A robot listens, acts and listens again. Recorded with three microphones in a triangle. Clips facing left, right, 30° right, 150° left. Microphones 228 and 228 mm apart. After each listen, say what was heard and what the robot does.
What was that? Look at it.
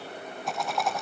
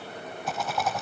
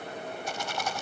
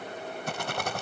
The rattle: straight behind. Turn 180° left.
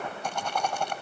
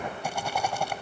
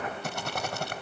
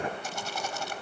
The rattle is now 10° right. Turn 10° right.
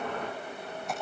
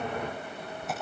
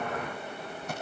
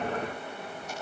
Found it: a rattle, straight ahead.